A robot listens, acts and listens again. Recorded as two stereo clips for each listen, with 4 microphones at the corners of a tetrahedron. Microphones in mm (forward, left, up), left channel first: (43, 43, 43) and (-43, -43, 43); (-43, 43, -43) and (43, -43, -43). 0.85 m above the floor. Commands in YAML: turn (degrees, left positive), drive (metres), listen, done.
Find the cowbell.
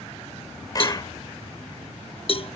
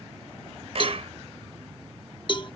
turn: 85
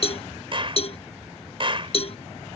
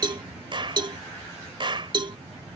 done: "Facing the cowbell."